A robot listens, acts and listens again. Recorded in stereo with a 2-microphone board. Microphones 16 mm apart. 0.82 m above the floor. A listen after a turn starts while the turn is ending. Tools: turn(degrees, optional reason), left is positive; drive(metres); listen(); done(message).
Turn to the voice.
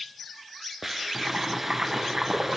listen()
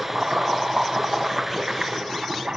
listen()
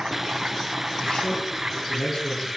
turn(degrees=45, reason="The man speaking: about 45° left or 135° left.")
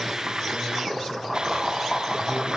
listen()
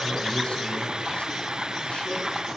listen()
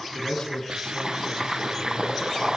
turn(degrees=85, reason="So it is at 85° left.")
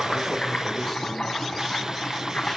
listen()
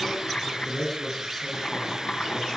turn(degrees=10, reason="The man speaking is now 10° left.")
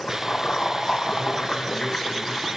listen()
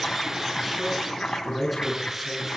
done("Found it: a man speaking, straight ahead.")